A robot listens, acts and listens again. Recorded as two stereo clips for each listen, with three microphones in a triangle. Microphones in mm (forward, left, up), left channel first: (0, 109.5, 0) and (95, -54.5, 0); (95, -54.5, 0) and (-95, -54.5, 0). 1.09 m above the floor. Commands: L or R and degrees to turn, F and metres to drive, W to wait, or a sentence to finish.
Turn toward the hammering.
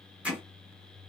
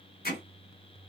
L25
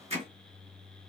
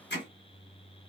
R10
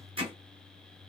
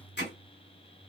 Found it: hammering, straight ahead, 1 to 2 m away.